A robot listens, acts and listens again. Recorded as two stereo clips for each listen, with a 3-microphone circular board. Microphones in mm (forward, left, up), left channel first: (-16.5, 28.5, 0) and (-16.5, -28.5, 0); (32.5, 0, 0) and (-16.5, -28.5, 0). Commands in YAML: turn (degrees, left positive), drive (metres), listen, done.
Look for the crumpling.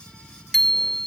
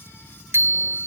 listen: true
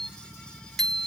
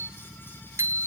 listen: true
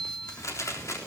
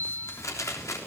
turn: 55
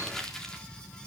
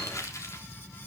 turn: 10
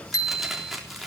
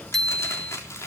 done: "Found it: crumpling, straight ahead."